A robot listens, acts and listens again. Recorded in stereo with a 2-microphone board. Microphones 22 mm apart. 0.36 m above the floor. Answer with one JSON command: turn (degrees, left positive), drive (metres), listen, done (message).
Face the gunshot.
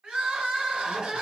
{"listen": true}
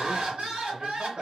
{"listen": true}
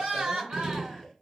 {"turn": 25}
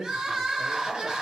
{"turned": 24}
{"listen": true}
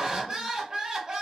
{"done": "I heard a gunshot, but can't make it out now. It was about straight ahead or 130° left."}